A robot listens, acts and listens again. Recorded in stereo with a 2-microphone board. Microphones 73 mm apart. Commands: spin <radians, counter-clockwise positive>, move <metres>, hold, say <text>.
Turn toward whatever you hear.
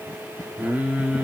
spin -0.26
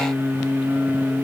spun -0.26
spin -0.35
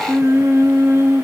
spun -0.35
spin -0.52
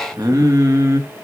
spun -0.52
spin -2.36
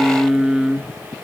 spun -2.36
spin -0.17
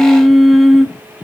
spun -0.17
say Found it: singing, straight ahead, 1 to 2 m away.